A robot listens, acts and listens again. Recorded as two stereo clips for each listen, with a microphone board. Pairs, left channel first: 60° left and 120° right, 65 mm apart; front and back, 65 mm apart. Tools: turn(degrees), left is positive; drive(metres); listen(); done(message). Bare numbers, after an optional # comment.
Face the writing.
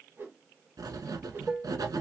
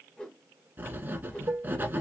# The writing: 120° right.
turn(-120)
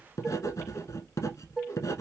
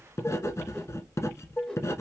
# The writing is now 35° left.
turn(35)
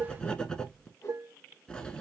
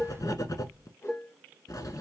# The writing is now 15° right.
turn(-15)
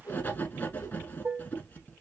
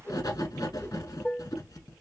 done("Facing the writing, 1 to 2 m away.")